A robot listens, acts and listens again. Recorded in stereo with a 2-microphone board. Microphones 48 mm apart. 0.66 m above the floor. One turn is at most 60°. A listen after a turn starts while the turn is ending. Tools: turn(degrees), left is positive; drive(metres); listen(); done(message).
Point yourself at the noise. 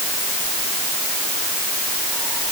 listen()
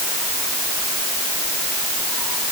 listen()
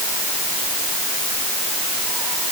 done("I can't make out anything.")